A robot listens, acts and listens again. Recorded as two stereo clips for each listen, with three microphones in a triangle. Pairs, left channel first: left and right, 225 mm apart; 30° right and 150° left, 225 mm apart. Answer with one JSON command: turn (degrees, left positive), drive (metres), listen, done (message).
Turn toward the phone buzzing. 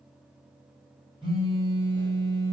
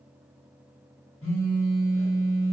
{"turn": -20}
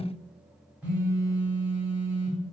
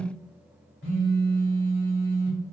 {"done": "Facing the phone buzzing."}